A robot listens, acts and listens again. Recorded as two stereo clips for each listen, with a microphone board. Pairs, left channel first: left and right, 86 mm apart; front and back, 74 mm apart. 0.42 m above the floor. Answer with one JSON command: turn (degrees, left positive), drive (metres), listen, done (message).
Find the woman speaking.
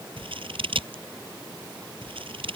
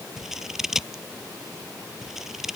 {"listen": true}
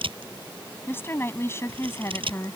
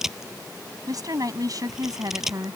{"turn": 145}
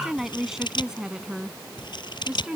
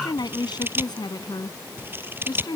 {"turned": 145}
{"turn": -10}
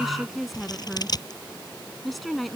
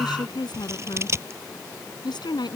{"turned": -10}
{"done": "Facing the woman speaking."}